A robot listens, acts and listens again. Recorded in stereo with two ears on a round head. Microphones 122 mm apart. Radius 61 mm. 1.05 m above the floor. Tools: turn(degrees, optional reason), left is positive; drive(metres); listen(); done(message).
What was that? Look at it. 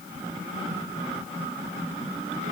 listen()
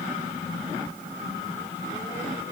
listen()
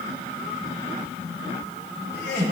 turn(degrees=90)
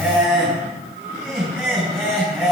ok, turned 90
done("Facing the laughter, 2 to 4 m away.")